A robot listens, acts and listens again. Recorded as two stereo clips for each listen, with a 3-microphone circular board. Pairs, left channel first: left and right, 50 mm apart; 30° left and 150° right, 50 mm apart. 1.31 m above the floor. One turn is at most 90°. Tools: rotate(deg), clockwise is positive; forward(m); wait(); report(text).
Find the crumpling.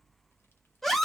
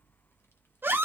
wait()
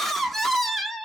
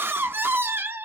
wait()
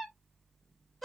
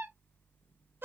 report("I can't make out crumpling to turn to.")